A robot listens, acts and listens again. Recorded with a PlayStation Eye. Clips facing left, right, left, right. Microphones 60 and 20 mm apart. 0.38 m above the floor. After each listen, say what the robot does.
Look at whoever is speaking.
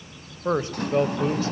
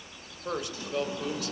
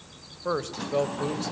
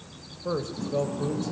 Turn 35° left.
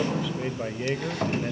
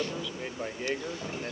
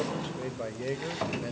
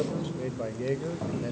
Turn 10° left.
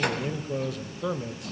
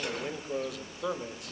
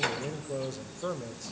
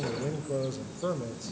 Found it: a man speaking, straight ahead, 1 to 2 m away.